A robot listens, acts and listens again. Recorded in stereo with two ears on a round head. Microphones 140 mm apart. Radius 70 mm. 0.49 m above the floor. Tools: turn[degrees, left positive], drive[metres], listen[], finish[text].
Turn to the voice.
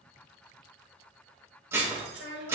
Thought: The child speaking: about 70° right or 110° right.
Action: turn[-70]
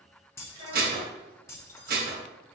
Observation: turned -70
Thought: So it is at 35° right.
Action: turn[-35]
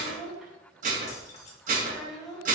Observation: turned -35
Action: finish[Found it: a child speaking, straight ahead.]